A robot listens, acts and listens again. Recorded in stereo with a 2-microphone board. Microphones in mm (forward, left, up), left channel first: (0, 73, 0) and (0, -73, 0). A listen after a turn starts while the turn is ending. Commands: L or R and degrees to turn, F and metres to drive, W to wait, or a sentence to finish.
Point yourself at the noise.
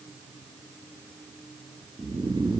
R35
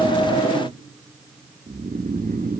R110
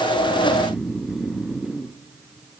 Facing the snoring, 1 to 2 m away.